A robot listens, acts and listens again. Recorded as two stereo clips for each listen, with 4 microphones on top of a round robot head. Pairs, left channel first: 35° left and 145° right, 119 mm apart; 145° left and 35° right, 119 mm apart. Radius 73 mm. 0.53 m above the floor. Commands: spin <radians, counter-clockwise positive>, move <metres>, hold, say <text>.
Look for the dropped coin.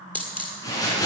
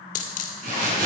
spin 2.01
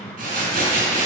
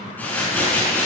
say Facing where the dropped coin came from. I can't hear it now.